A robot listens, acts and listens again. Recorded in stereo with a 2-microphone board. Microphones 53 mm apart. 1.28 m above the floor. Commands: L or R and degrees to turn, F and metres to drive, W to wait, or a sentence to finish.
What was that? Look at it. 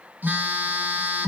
R35
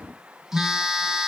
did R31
R10
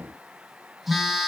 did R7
Found it: a phone buzzing, straight ahead.